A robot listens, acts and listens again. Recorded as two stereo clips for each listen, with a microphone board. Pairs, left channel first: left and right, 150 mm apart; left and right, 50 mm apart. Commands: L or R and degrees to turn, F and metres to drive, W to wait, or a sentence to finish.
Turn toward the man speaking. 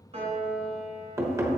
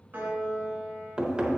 W
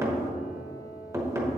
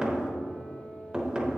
W
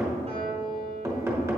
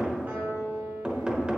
I can't make out a man speaking to turn to.